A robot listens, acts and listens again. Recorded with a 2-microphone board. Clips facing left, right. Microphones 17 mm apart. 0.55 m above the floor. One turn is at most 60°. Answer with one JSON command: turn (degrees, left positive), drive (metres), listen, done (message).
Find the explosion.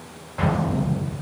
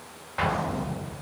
{"turn": -25}
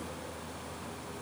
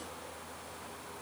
{"listen": true}
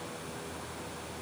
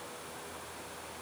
{"done": "I heard an explosion, but can't make it out now. It was about straight ahead or 130° right."}